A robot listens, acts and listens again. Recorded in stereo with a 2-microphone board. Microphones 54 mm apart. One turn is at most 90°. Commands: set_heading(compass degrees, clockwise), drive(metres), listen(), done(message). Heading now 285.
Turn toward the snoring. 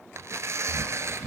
set_heading(315)
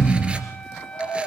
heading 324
set_heading(294)
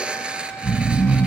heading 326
set_heading(296)
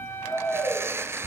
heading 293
done("Found it: snoring, straight ahead, 2 to 4 m away.")